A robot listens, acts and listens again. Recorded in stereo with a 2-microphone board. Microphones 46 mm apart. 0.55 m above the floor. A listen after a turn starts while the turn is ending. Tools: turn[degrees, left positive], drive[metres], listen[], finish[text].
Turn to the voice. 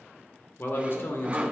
Thought: The man speaking: about 50° left or 130° left.
Action: turn[50]
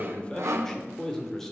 Thought: So it is at 10° left.
Action: turn[10]
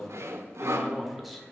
Action: finish[Found it: a man speaking, straight ahead.]